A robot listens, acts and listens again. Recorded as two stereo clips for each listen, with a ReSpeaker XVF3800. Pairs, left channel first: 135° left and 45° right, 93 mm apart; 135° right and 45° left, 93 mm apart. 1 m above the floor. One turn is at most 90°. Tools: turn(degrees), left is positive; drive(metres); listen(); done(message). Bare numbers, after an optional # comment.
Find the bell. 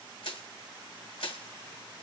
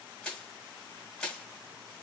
listen()
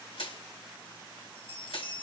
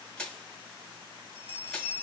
# The bell: 110° left.
turn(90)
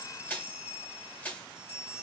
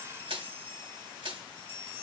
# The bell is now 30° left.
turn(30)
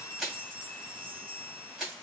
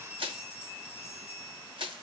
done("Found it: a bell, straight ahead.")